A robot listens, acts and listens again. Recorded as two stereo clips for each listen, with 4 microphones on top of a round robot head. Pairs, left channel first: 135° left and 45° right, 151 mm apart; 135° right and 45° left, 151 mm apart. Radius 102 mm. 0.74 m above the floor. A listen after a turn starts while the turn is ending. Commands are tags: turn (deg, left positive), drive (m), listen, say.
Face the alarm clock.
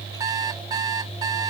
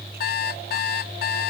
<turn deg="-115"/>
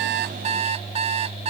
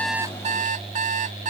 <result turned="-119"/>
<say>Facing the alarm clock.</say>